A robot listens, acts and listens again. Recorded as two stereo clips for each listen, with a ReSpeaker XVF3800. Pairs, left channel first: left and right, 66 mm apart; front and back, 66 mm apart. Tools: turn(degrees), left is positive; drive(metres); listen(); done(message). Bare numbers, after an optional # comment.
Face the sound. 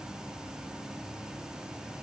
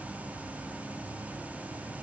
listen()
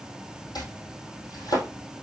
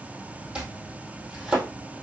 # The chopping: 105° left.
turn(105)
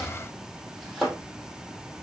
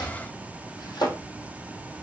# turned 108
done("Facing the chopping.")